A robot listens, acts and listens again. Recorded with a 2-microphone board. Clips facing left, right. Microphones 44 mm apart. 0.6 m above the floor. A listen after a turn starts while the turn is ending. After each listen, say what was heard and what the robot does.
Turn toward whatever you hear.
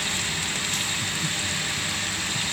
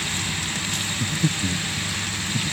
The breathing: about 60° right or 120° right. Turn 60° right.
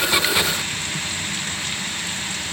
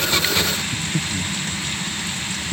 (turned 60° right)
So it is at 60° right. Turn 60° right.
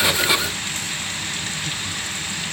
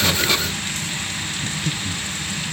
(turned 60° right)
The breathing is now 25° right. Turn 25° right.
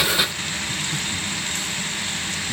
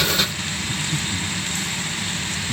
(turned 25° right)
Facing the breathing.